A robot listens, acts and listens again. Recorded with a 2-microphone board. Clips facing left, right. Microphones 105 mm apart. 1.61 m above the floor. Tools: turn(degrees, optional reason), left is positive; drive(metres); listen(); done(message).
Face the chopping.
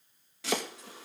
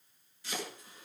turn(degrees=90)
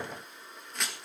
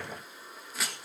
done("Facing the chopping.")